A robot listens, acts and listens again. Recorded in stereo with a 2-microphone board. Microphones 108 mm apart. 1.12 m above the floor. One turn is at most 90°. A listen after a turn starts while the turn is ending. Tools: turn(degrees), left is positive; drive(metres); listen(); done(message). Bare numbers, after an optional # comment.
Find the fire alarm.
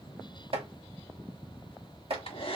listen()
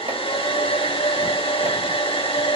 listen()
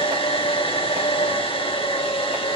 done("I can't make out a fire alarm to turn to.")